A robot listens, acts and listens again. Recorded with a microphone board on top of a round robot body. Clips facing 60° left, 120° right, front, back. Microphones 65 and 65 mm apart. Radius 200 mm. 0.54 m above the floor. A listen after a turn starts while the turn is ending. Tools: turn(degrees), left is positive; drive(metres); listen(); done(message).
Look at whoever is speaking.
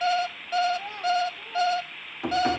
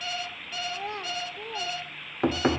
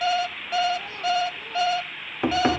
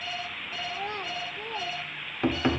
turn(degrees=-140)
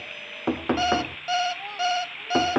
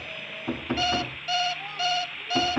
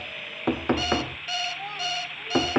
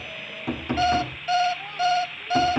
turn(degrees=15)
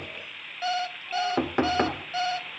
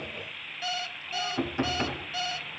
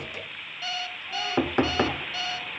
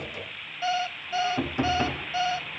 listen()
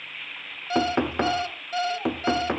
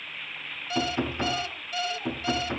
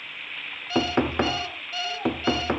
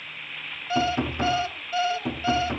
listen()
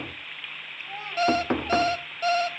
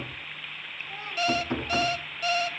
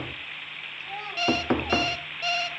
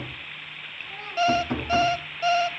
turn(degrees=15)
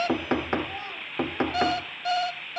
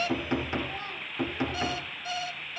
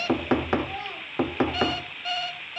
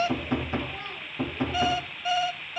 done("Found it: a child speaking, straight ahead.")